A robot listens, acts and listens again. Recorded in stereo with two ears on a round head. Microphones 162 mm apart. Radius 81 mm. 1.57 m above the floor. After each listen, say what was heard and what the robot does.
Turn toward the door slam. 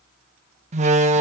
The door slam: about 40° right or 140° right. Turn 40° right.
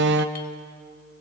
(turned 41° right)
So it is at 95° right. Turn 95° right.
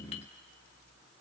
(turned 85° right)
Nothing new. It was at 10° right. Turn 10° right.
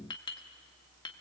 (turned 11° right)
Facing where the door slam came from. I can't hear it now.